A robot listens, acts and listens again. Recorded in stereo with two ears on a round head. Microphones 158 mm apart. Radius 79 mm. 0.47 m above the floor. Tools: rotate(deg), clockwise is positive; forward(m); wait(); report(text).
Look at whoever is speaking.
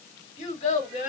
rotate(-50)
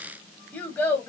rotate(-15)
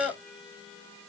report("Found it: a child speaking, straight ahead, 1 to 2 m away.")